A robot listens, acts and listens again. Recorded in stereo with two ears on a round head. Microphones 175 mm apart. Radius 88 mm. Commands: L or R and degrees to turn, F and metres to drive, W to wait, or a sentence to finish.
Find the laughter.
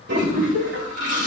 R70
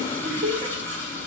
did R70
R30
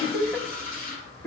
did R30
L10
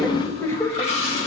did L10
L15
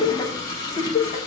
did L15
L35
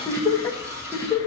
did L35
L15
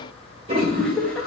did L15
Facing the laughter.